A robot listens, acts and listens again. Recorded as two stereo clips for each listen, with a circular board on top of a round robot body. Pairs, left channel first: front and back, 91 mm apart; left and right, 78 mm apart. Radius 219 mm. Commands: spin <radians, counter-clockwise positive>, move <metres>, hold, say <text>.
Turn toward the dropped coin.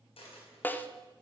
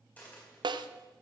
spin 0.35
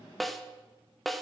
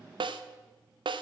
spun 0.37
say I heard a dropped coin from this way, but can't make it out now.